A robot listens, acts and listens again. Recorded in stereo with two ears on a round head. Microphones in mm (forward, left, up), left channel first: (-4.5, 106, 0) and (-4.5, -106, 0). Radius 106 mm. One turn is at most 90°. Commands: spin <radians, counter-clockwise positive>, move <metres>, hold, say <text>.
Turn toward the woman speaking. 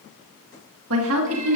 spin -1.22
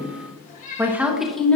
say Found it: a woman speaking, straight ahead, 1 to 2 m away.